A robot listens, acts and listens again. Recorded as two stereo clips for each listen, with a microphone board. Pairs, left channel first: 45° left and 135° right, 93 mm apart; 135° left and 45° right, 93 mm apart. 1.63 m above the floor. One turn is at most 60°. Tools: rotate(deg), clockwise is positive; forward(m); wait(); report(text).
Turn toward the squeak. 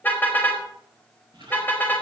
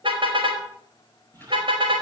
rotate(60)
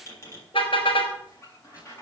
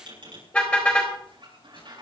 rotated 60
rotate(15)
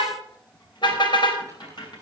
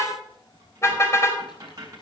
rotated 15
report("Facing the squeak.")